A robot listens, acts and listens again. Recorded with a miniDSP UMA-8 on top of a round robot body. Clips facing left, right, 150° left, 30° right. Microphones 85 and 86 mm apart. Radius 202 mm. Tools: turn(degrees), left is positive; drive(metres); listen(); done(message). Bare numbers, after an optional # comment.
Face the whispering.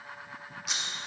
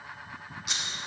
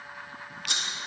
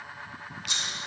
listen()
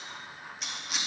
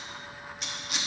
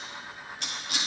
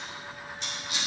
listen()
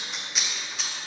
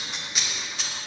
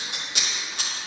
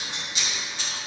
done("I can't make out whispering to turn to.")